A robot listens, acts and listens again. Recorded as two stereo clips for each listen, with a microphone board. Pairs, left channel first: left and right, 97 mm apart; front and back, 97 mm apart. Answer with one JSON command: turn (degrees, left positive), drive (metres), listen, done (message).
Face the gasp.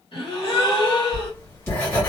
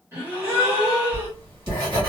{"turn": 115}
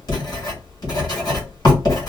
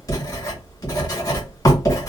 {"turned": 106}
{"turn": 10}
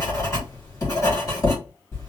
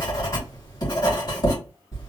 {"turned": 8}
{"done": "Facing where the gasp came from. I can't hear it now."}